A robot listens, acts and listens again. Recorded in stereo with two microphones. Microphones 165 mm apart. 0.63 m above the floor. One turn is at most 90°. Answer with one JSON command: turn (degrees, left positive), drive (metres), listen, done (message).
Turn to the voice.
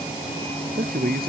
{"turn": -65}
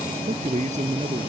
{"turn": -45}
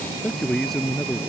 {"done": "Facing the man speaking."}